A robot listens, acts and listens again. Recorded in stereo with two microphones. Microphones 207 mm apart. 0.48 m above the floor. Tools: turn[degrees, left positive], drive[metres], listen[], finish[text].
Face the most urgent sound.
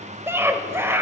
Action: turn[-30]
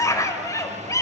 Thought: So it is at 15° left.
Action: turn[15]
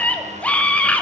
Action: finish[Facing the scream.]